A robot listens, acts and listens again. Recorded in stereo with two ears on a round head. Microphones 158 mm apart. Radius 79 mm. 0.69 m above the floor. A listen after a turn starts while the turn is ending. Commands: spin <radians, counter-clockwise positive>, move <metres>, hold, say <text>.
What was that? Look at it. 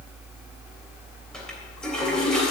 spin 0.52
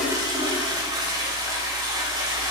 spin -0.44
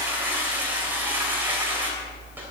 spin -0.17
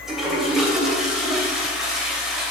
say Facing the toilet flushing.